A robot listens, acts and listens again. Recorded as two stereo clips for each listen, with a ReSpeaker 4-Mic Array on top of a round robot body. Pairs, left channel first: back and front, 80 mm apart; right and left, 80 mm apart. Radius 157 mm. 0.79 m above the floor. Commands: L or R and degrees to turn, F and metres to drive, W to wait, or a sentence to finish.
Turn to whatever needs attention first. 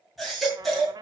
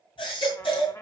R90
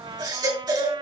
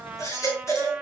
R35
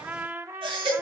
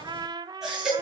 Found it: a baby crying, straight ahead.